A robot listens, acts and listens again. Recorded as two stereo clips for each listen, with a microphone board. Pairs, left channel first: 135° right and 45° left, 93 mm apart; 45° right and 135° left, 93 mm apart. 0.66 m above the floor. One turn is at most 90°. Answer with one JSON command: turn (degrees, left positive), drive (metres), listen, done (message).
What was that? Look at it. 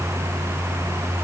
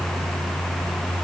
{"listen": true}
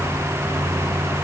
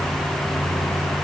{"listen": true}
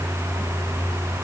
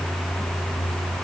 {"done": "I can't make out anything to turn to."}